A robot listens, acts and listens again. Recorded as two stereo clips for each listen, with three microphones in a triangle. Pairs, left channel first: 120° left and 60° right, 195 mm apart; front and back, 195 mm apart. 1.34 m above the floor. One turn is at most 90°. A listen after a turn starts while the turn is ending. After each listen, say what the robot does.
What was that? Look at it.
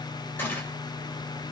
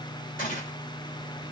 Turn 40° left.
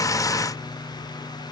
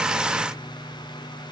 Facing where the gunshot came from. I can't hear it now.